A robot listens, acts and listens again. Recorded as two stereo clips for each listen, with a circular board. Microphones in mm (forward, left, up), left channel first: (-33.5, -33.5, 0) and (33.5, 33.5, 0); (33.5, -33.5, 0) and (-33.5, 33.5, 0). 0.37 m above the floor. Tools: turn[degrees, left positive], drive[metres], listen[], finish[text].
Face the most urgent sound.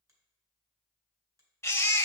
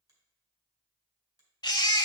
Thought: The baby crying: 75° right.
Action: turn[-75]
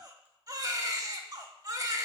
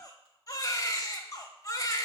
Action: finish[Facing the baby crying, under 1 m away.]